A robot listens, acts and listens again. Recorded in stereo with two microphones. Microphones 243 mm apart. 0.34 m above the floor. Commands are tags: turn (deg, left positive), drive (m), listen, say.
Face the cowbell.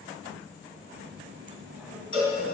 <turn deg="60"/>
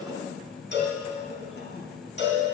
<turn deg="55"/>
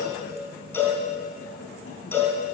<turn deg="10"/>
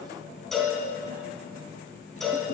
<say>Found it: a cowbell, straight ahead, 2 to 4 m away.</say>